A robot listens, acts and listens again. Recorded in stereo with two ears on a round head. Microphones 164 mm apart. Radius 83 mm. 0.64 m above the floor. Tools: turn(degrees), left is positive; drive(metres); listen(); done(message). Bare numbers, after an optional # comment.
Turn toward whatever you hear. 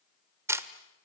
turn(-30)
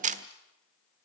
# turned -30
# So it is at 135° right.
turn(-135)
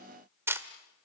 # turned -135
# The camera shutter is now 15° right.
turn(-15)
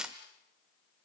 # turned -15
done("Found it: a camera shutter, straight ahead.")